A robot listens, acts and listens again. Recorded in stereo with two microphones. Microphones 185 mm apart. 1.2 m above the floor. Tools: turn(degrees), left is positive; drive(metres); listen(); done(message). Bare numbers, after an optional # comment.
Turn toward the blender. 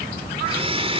# The blender: about 30° right or 150° right.
turn(-30)
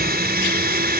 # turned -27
# So it is at 120° right.
turn(-120)
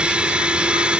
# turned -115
done("Facing the blender.")